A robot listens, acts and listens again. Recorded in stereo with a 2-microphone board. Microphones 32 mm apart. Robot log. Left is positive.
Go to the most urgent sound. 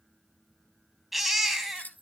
cmd yaw +30
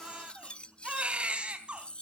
note: So it is at 35° right.
cmd yaw -35
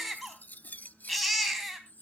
cmd fwd 1.0
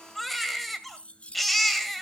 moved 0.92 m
cmd fwd 1.0
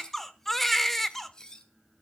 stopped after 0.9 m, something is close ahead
note: The baby crying is now 10° left.
cmd yaw +10
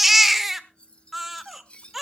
end: Arrived at the baby crying, straight ahead.